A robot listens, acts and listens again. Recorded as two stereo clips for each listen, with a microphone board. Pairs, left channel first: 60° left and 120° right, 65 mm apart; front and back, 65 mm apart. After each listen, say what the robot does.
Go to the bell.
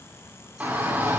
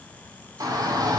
Keep listening.
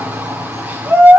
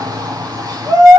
Keep listening.
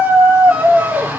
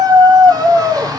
I can't make out a bell to turn to.